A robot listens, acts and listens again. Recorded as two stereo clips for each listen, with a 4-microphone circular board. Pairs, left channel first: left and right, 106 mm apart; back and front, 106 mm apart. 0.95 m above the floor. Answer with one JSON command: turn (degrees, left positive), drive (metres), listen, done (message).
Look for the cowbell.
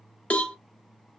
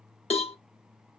{"turn": 170}
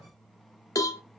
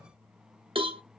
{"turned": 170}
{"turn": 35}
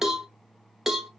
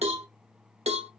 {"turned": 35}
{"done": "Facing the cowbell, under 1 m away."}